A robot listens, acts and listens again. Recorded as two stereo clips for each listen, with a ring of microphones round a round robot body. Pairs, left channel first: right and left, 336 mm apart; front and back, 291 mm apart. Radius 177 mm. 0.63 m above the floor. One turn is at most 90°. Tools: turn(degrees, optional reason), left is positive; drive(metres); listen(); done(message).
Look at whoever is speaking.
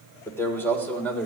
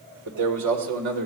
turn(degrees=-90, reason="The man speaking: 175° right.")
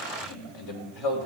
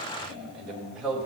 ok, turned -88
turn(degrees=-90, reason="The man speaking is now 95° right.")
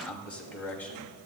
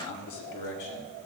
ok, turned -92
done("Found it: a man speaking, straight ahead.")